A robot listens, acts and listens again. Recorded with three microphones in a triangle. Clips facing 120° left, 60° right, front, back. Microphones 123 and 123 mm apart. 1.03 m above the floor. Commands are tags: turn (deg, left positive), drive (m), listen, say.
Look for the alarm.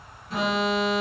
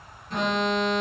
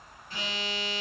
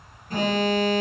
<turn deg="-150"/>
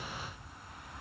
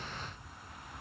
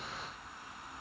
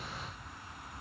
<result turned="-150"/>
<listen/>
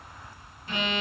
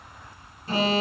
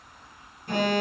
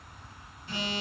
<turn deg="-15"/>
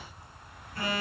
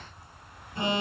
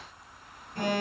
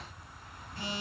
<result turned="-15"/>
<say>Facing the alarm.</say>